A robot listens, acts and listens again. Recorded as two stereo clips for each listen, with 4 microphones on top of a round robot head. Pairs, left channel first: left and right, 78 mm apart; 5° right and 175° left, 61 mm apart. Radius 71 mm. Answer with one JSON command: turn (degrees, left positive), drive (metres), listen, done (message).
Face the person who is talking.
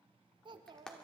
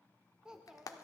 {"turn": -105}
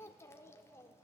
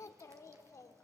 {"turn": 30}
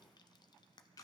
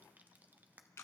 {"listen": true}
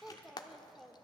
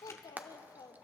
{"done": "Found it: a child speaking, straight ahead, 1 to 2 m away."}